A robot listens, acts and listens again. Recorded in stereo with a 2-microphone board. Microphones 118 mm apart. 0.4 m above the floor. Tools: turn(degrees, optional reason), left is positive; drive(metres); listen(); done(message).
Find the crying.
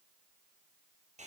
listen()
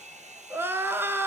turn(degrees=-20, reason="The crying: about 20° right or 160° right.")
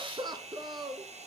turn(degrees=-140, reason="So it is at 140° right.")
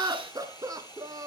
turn(degrees=-30, reason="The crying is now 30° right.")
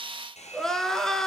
done("Found it: crying, straight ahead, under 1 m away.")